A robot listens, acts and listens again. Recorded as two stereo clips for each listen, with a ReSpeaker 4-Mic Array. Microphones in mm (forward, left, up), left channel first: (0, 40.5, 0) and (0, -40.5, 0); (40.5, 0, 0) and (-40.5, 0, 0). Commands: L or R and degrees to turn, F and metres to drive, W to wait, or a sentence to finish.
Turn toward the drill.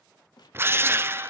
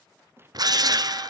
R150
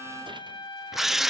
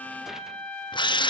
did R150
Found it: a drill, straight ahead.